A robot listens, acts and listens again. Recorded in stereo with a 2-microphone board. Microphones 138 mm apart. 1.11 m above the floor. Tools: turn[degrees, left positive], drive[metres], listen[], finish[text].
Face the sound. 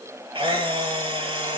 Thought: The camera shutter: about 40° right or 140° right.
Action: turn[-40]
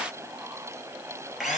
Action: finish[Facing the camera shutter, over 4 m away.]